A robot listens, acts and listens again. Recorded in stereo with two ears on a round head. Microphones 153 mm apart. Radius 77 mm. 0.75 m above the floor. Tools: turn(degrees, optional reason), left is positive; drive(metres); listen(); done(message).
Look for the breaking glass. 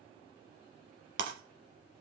turn(degrees=-90)
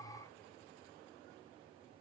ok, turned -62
turn(degrees=-30, reason="Nothing new. It was at 30° right.")
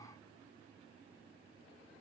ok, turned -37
turn(degrees=10, reason="Nothing new. It was at 10° left.")
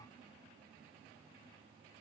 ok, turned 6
done("I heard breaking glass from this way, but can't make it out now.")